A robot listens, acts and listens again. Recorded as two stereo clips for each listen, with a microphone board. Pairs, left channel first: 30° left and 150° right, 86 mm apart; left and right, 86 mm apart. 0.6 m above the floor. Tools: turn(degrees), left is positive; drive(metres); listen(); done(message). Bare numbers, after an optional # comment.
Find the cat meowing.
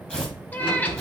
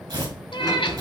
# The cat meowing: 100° left.
turn(100)
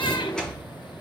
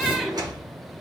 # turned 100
listen()
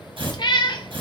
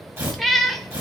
done("Facing the cat meowing.")